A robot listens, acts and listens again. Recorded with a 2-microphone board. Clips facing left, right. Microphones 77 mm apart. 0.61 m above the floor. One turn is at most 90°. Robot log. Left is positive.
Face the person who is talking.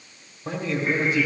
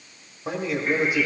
cmd yaw -30
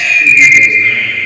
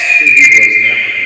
cmd idle
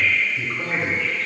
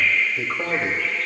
note: So it is at 135° right.
cmd yaw -90
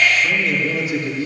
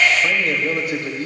note: The man speaking is now 50° right.
cmd yaw -50
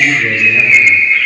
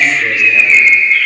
note: The man speaking is now 20° right.
cmd yaw -20
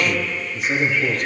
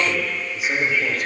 end: Facing the man speaking.